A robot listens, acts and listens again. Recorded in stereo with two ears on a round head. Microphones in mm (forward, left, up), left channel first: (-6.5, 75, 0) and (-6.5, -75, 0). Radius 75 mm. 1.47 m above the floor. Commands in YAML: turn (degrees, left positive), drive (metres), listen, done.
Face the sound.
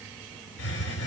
turn: 90
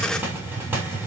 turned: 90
turn: -10
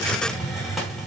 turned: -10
done: "Facing the hiss."